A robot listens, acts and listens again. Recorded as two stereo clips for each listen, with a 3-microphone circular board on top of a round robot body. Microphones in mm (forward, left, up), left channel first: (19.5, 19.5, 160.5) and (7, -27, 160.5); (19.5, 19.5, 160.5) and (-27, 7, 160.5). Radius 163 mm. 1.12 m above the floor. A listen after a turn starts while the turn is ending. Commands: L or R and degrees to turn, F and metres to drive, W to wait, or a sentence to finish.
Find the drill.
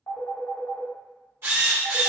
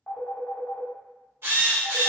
R135
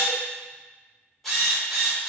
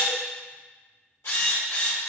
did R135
R10
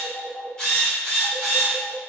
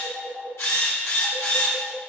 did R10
Facing the drill.